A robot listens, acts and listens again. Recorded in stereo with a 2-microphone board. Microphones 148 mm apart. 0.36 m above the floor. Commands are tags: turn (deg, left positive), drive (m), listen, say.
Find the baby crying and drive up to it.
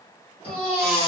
<turn deg="-40"/>
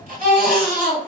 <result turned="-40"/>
<turn deg="-95"/>
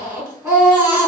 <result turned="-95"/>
<turn deg="-15"/>
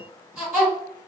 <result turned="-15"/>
<drive m="1.0"/>
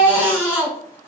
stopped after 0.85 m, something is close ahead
<turn deg="-15"/>
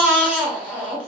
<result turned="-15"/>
<turn deg="-10"/>
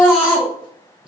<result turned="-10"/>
<say>Arrived at the baby crying, straight ahead.</say>